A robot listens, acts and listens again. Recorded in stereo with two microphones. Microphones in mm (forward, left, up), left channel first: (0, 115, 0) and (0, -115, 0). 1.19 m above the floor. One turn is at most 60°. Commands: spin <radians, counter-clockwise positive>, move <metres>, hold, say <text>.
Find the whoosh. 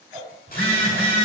spin -0.44
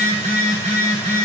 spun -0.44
hold
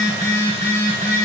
hold
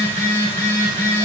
say I heard a whoosh, but can't make it out now. It was about straight ahead or 130° right.